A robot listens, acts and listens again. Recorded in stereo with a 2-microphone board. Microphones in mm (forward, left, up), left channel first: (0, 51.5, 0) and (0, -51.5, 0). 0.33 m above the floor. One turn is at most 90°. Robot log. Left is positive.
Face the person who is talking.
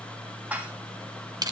cmd idle
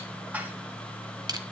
cmd idle
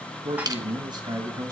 note: The man speaking: about 35° right or 145° right.
cmd yaw -35
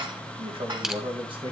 note: So it is at 130° right.
cmd yaw -90
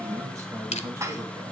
note: The man speaking is now 30° right.
cmd yaw -30
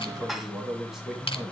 end: Facing the man speaking.